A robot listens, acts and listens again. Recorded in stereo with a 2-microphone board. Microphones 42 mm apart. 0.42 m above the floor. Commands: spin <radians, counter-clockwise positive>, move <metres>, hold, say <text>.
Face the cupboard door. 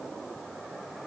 hold
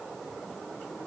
hold
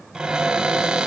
spin -0.35
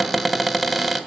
say Facing the cupboard door, 1 to 2 m away.